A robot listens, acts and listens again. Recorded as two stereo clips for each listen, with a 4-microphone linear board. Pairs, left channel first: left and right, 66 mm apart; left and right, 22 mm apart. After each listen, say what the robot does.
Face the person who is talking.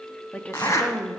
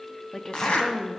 Turn 20° left.
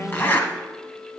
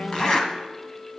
Keep listening.
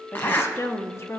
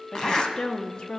Turn 135° left.
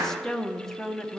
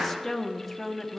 Found it: a woman speaking, straight ahead, 1 to 2 m away.